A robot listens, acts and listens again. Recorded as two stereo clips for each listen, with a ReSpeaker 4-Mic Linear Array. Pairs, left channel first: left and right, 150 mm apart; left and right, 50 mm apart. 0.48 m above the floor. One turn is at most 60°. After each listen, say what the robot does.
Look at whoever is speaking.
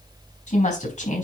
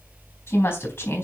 Turn 55° left.
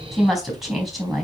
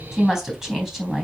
Facing the woman speaking, 2 to 4 m away.